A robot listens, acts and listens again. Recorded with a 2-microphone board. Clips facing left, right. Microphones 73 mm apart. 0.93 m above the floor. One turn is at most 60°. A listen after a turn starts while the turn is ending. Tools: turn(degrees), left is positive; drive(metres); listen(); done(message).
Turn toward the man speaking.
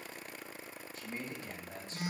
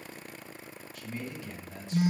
turn(degrees=40)
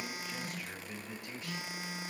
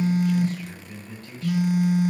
turn(degrees=15)
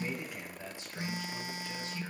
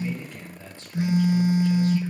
turn(degrees=15)
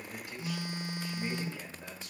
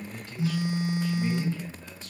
turn(degrees=20)
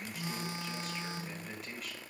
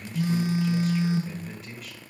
done("Found it: a man speaking, straight ahead, 2 to 4 m away.")